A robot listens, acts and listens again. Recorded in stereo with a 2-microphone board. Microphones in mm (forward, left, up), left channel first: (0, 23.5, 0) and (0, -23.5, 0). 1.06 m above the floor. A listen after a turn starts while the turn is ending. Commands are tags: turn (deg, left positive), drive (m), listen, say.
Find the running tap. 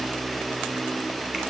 <listen/>
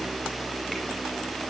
<listen/>
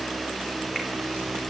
<say>I can't make out a running tap.</say>